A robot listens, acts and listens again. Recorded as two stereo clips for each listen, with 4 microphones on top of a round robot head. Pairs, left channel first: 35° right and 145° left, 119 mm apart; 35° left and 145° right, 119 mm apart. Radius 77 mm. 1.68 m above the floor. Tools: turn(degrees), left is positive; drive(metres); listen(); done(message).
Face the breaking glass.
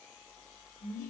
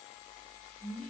listen()
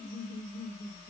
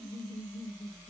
listen()
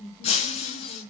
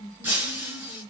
turn(degrees=-70)
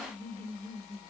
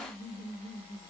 done("Facing where the breaking glass came from. I can't hear it now.")